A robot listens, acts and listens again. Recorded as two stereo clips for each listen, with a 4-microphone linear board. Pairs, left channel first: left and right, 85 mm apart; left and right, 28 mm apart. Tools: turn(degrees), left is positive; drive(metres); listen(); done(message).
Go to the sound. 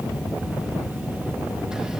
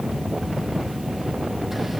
listen()
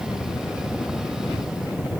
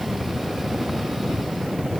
listen()
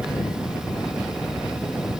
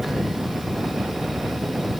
done("I can't make out anything to turn to.")